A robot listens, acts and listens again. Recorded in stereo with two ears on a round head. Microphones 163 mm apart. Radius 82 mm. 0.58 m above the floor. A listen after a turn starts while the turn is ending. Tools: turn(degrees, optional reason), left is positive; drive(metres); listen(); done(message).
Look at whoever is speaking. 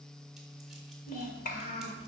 turn(degrees=50, reason="The child speaking: about 50° left or 130° left.")
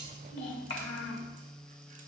turn(degrees=75, reason="So it is at 75° left.")
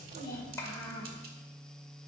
turn(degrees=15, reason="The child speaking is now 15° left.")
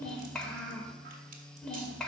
done("Facing the child speaking.")